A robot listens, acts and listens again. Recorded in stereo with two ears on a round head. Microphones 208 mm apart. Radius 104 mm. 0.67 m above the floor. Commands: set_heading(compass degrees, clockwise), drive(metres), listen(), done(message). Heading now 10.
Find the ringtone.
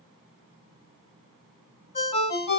set_heading(340)
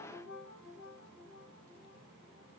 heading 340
listen()
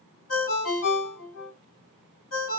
set_heading(220)
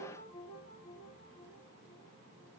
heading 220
listen()
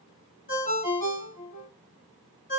set_heading(185)
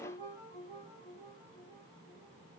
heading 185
listen()
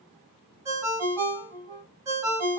set_heading(200)
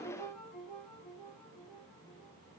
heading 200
done("Found it: a ringtone, straight ahead.")